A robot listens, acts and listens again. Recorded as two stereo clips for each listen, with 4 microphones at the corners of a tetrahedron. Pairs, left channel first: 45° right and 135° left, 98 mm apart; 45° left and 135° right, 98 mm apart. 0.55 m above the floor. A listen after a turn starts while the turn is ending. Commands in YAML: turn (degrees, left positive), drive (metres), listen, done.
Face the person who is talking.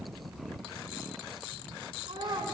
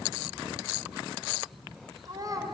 turn: 175
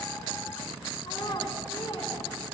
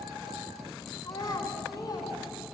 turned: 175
done: "Facing the child speaking."